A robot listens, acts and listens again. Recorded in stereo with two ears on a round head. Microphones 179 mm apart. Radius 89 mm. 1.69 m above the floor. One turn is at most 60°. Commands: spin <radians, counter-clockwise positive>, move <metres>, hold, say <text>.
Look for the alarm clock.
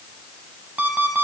spin -0.52
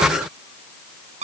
spin -1.05
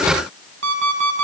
spin -1.05
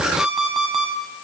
say Facing the alarm clock, over 4 m away.